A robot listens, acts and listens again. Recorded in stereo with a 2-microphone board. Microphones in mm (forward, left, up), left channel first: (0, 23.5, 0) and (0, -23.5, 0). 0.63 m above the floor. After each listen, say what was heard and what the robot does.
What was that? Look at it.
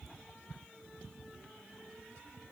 Keep listening.
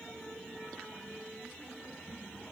Keep listening.
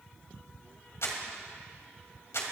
Turn 90° left.
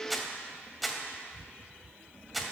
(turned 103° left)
Facing the crumpling.